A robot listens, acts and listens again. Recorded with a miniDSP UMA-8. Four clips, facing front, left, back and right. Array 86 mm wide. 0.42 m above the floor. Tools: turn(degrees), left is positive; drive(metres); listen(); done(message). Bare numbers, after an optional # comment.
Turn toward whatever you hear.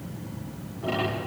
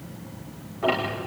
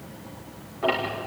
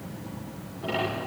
# The ticking: 135° left.
turn(135)
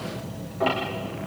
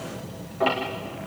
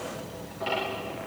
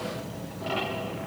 # The ticking is now 60° left.
turn(60)
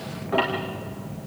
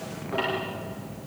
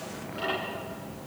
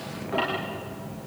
done("Found it: ticking, straight ahead.")